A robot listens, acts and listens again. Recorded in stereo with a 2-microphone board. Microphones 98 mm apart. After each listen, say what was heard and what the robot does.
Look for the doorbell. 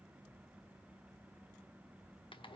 Keep listening.
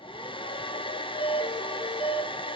The doorbell: about 70° left or 110° left. Turn 70° left.
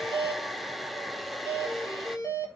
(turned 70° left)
So it is at 35° left. Turn 35° left.
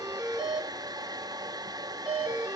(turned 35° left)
The doorbell is now 10° right. Turn 10° right.
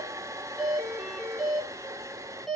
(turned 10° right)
Facing the doorbell.